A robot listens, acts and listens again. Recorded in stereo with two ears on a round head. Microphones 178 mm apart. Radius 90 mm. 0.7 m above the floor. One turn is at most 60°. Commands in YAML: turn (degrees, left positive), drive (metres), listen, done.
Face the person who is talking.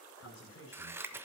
turn: 60
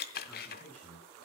turn: 10
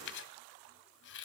listen: true
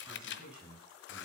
done: "Found it: a man speaking, straight ahead, over 4 m away."